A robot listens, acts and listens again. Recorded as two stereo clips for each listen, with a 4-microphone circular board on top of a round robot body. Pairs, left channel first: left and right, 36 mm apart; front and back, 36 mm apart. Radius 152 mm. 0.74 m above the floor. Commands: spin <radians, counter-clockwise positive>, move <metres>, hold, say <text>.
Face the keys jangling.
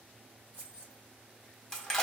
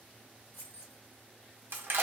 spin -0.61
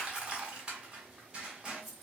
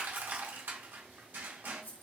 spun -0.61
say Found it: keys jangling, straight ahead, 1 to 2 m away.